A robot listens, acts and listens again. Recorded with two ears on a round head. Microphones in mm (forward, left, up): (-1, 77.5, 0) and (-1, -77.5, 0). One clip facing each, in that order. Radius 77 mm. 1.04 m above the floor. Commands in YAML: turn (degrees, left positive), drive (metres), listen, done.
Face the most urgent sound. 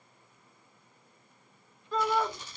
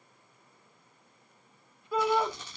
turn: -30
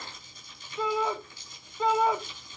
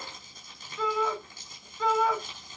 turn: 20
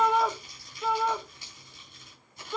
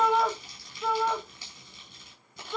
done: "Found it: a shout, straight ahead, 1 to 2 m away."